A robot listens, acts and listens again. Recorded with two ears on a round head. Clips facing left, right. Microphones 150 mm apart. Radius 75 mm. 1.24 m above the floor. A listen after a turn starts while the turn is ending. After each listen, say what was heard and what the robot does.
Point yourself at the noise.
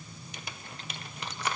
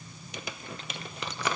The crumpling: about 65° right or 115° right. Turn 65° right.
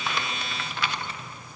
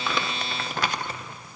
So it is at 40° right. Turn 40° right.
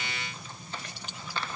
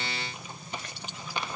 The crumpling is now 15° right. Turn 15° right.
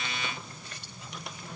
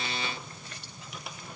Keep listening.
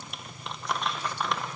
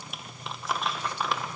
Facing the crumpling, under 1 m away.